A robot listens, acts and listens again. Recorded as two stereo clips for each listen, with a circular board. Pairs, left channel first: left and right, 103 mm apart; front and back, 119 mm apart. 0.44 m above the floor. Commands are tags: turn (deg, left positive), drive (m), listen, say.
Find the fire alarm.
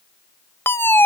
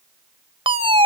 <turn deg="155"/>
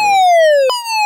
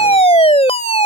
<say>Found it: a fire alarm, straight ahead.</say>